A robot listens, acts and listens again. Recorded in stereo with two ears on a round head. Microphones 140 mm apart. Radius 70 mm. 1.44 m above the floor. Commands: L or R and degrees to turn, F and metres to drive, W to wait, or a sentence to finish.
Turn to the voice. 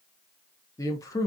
L20
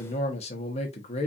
L140
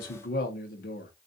L65
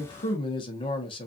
L35
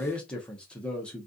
Facing the man speaking.